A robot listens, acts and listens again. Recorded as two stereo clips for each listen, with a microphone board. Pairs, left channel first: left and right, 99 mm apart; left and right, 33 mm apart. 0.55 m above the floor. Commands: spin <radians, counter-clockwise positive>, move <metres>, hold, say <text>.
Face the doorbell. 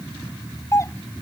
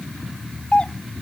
spin 0.52
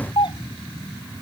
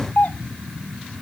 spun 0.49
spin 2.09
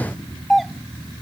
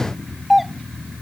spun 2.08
say Facing the doorbell.